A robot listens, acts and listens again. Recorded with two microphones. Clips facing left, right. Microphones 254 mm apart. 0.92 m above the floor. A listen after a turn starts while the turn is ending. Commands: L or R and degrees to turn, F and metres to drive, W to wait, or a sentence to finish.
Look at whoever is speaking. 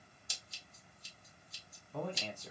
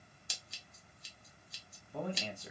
R30
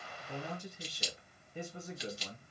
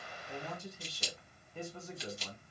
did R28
L15
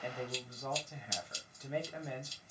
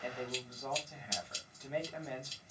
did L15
Found it: a man speaking, straight ahead, 1 to 2 m away.